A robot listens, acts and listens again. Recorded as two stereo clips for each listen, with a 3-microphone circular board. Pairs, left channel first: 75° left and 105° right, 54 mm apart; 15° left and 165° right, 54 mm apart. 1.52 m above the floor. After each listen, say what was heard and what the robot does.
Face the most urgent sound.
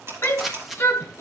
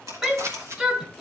The shout: 120° left. Turn 120° left.
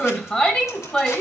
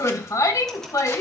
Facing the shout.